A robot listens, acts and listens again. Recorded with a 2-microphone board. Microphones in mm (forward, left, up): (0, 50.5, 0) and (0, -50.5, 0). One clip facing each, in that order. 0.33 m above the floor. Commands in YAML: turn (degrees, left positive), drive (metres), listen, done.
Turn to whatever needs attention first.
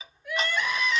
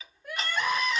turn: -45
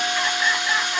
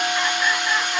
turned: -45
listen: true
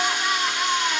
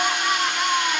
done: "Found it: crying, straight ahead, 1 to 2 m away."